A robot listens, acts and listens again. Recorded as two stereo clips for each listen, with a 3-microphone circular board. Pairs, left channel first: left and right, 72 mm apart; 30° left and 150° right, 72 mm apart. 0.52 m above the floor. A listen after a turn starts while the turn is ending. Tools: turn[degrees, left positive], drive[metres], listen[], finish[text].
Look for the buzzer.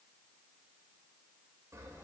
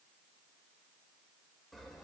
Action: listen[]
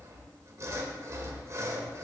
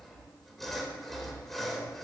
Action: listen[]
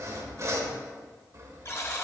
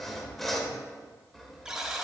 Thought: The buzzer: 130° left.
Action: turn[130]
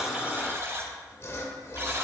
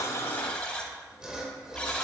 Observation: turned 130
Thought: The buzzer is now 40° right.
Action: turn[-40]
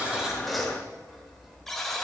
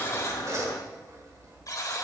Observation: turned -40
Action: finish[Facing the buzzer.]